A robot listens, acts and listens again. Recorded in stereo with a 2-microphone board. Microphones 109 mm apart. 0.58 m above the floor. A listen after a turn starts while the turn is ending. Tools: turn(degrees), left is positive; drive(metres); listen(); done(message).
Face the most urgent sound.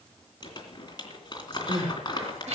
turn(degrees=-75)
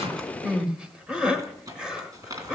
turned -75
turn(degrees=-10)
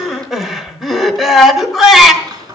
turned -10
done("Facing the crying, 1 to 2 m away.")